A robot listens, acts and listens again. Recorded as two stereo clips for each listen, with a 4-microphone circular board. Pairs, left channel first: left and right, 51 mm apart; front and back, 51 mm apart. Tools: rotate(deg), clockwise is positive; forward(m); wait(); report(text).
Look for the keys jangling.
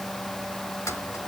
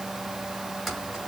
rotate(-90)
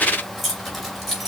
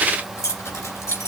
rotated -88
report("Facing the keys jangling, 2 to 4 m away.")